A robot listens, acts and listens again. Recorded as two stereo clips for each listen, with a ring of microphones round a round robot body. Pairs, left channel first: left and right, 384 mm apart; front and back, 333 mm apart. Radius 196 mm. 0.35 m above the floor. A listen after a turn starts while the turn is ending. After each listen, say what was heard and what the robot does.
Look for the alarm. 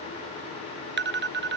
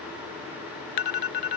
The alarm: 25° right. Turn 25° right.
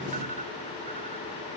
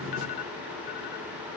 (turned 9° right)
Nothing new. It was at 20° right. Turn 20° right.
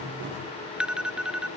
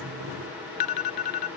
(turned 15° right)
Found it: an alarm, straight ahead.